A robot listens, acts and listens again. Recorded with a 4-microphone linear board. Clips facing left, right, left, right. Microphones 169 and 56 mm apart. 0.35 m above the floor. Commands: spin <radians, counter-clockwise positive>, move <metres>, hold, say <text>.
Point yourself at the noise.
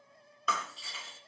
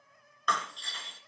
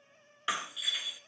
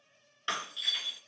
spin 0.52
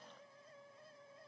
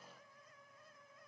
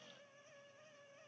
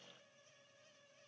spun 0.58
hold
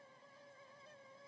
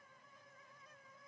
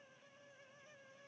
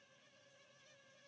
say I heard breaking glass, but can't make it out now. It was about 25° right or 140° left.